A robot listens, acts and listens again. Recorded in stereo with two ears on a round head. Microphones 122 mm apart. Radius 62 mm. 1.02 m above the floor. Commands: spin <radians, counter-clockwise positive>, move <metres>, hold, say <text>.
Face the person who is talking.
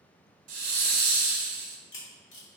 hold
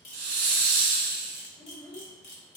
spin 0.61
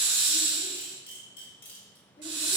hold
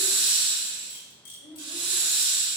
spin 1.92
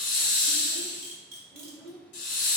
spin -0.26
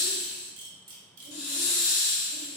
hold
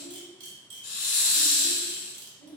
say Found it: a child speaking, straight ahead.